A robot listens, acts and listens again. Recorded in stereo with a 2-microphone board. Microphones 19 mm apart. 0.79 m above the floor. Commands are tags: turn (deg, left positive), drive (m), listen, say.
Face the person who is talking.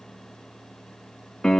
<listen/>
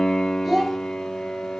<turn deg="-30"/>
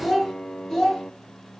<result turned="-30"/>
<turn deg="35"/>
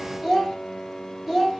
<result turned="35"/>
<say>Facing the child speaking.</say>